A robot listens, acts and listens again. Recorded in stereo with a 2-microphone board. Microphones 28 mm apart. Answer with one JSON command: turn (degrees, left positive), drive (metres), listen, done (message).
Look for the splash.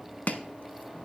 {"listen": true}
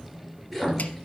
{"turn": 30}
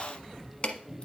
{"listen": true}
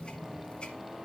{"done": "I heard a splash, but can't make it out now. It was about 25° right or 145° left."}